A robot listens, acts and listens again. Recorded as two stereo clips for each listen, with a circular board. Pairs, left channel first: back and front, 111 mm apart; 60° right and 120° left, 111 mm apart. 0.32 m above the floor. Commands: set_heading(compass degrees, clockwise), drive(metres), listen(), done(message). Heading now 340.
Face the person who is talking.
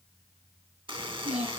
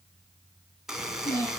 done("Found it: a child speaking, straight ahead.")